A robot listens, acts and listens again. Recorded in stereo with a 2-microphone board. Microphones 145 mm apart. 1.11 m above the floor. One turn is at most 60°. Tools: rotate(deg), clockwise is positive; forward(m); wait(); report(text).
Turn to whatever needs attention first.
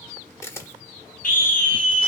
rotate(-60)
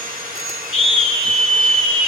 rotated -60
rotate(-50)
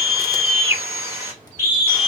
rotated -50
rotate(20)
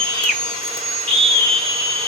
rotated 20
report("Found it: a scream, straight ahead, 2 to 4 m away.")